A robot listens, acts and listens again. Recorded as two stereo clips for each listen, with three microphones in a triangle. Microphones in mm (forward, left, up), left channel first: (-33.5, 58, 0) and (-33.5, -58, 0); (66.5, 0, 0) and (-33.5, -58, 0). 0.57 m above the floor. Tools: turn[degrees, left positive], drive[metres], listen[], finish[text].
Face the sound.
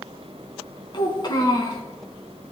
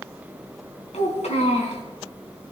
Thought: The child speaking: 40° left.
Action: turn[40]
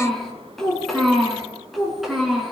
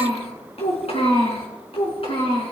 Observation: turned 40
Action: finish[Found it: a child speaking, straight ahead.]